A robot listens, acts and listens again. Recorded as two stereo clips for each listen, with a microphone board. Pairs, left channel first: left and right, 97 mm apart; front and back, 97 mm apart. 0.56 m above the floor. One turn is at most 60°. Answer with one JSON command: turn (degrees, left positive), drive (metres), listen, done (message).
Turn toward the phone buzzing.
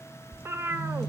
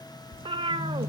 {"turn": -60}
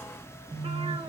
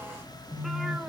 {"turn": -60}
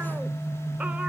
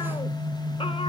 {"turn": 20}
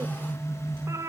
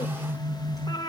{"done": "Facing the phone buzzing."}